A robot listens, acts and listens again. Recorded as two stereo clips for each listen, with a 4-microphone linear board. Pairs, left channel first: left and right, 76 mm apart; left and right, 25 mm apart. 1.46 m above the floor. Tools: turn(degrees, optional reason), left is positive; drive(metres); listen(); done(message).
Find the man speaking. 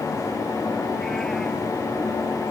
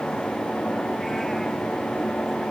listen()
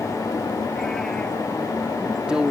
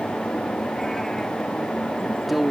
turn(degrees=-30)
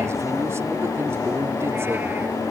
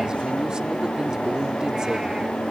listen()
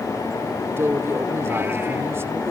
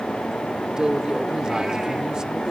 turn(degrees=-145, reason="So it is at 145° right.")
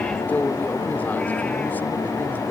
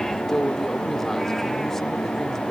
turn(degrees=25, reason="The man speaking is now 25° left.")
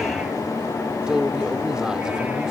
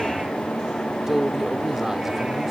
turn(degrees=-10, reason="The man speaking is now 10° right.")
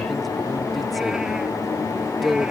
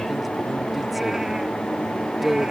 done("Facing the man speaking.")